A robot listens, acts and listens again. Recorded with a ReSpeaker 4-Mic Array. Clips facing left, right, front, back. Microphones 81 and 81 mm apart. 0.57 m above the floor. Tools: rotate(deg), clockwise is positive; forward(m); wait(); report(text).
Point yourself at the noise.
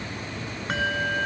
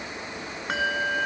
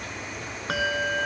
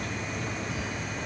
report("Found it: a bell, straight ahead.")